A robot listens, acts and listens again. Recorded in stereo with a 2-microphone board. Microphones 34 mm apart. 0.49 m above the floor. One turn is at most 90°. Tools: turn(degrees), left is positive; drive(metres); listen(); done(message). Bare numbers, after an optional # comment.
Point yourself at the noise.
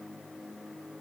listen()
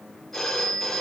turn(30)
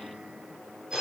# So it is at 20° right.
turn(-20)
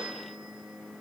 done("Facing the phone ringing, over 4 m away.")